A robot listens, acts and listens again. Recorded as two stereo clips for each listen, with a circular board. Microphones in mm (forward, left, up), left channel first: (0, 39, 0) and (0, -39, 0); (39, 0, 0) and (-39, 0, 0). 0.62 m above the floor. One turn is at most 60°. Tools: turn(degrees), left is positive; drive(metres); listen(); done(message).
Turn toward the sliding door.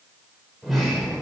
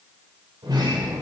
turn(degrees=60)
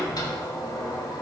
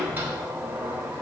turn(degrees=60)
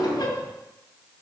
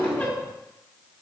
turn(degrees=60)
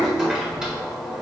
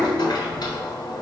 turn(degrees=-10)
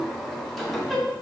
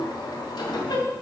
done("Facing the sliding door.")